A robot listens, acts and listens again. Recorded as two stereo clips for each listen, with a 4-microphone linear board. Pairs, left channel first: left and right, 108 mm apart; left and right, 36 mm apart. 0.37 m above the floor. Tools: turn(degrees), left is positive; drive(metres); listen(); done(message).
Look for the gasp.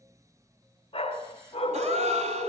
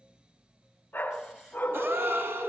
turn(degrees=-90)
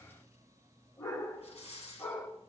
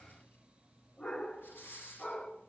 done("I heard a gasp from this way, but can't make it out now.")